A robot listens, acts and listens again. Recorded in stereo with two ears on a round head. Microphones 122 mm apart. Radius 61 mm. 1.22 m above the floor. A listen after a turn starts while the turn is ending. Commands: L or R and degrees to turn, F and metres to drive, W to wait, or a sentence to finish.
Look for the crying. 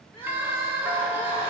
L40
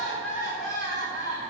L95
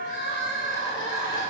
L30
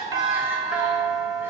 W
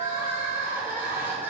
R20
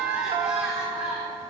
Facing the crying.